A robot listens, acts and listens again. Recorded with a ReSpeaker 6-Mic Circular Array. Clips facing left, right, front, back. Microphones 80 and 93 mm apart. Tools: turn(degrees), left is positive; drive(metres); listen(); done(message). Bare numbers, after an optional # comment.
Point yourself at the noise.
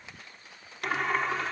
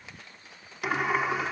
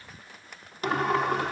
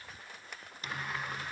done("Facing the sliding door.")